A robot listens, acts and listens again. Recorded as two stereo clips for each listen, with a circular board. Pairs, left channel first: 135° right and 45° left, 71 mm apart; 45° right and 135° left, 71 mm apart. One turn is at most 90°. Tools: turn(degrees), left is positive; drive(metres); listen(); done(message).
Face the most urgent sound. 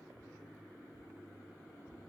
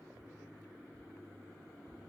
listen()
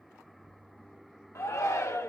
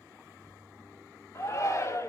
turn(degrees=-90)
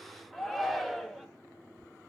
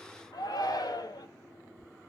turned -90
turn(degrees=-45)
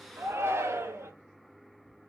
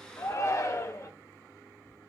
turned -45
done("Facing the shout.")